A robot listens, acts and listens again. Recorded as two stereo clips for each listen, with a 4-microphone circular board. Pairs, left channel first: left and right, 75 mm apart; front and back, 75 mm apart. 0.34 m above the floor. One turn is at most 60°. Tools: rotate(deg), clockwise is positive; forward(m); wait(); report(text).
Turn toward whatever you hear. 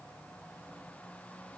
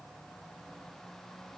wait()
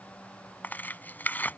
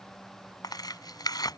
rotate(-25)
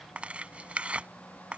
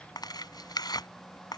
rotate(15)
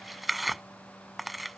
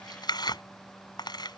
report("Facing the tearing paper.")